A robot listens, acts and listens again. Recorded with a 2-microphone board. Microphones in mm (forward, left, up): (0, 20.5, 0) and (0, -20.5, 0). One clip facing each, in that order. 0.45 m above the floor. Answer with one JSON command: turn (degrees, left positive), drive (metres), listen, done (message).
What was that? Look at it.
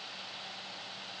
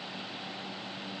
{"listen": true}
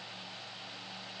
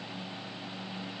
{"listen": true}
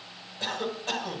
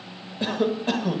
{"turn": -15}
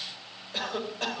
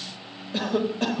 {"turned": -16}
{"done": "Facing the cough."}